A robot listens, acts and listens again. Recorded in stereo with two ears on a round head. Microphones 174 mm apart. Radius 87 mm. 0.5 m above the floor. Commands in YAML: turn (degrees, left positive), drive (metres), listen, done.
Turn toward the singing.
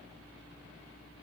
listen: true
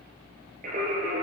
turn: -40
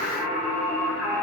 done: "Found it: singing, straight ahead, 2 to 4 m away."